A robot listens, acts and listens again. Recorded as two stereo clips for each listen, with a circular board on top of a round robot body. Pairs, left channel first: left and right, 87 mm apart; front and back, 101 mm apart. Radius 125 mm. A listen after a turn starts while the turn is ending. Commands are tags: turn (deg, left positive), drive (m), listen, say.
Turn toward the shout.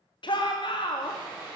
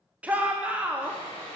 <turn deg="105"/>
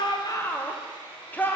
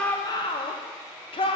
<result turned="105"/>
<turn deg="20"/>
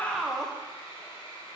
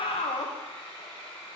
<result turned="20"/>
<say>Facing the shout.</say>